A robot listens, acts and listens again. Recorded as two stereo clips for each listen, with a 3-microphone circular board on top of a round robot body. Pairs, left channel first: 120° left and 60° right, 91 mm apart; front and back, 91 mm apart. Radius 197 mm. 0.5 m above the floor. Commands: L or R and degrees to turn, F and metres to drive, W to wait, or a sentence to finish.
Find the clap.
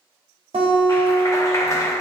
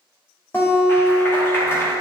L65
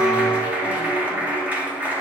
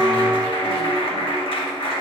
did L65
L15
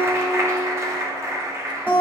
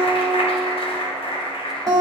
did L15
Found it: a clap, straight ahead.